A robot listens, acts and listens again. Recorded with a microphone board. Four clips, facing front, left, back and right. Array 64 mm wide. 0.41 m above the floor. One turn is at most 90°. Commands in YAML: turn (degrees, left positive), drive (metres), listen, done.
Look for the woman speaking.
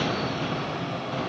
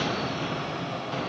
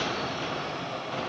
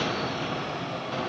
listen: true
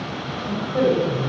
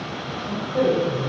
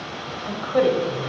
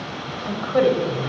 turn: -90
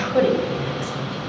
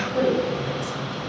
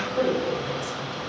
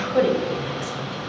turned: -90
turn: -35
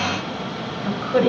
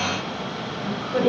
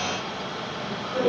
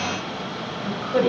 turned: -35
turn: -15
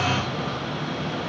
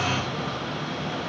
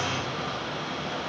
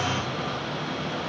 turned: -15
listen: true
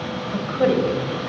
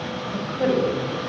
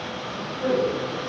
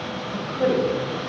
done: "Found it: a woman speaking, straight ahead, 1 to 2 m away."